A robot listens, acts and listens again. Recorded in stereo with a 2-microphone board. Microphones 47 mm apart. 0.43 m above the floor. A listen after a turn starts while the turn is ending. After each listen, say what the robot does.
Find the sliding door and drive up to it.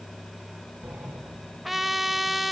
Turn 45° right.
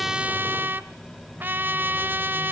Drive 1.0 m forward.
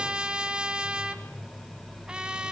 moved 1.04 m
Drive 1.0 m forward.
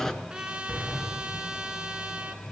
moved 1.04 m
Turn 10° left.
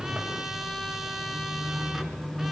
Drive 1.0 m forward.
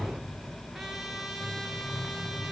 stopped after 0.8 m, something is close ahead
Arrived at the sliding door, straight ahead.